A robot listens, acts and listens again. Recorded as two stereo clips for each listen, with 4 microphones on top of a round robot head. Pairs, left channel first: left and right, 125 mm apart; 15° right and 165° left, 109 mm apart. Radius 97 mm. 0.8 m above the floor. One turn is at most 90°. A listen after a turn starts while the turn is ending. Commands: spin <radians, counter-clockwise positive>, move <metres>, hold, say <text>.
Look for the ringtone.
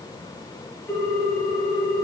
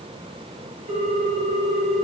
spin 1.57
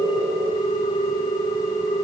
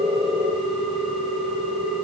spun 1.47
spin 1.31
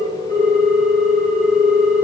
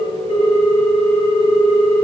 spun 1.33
say Facing the ringtone.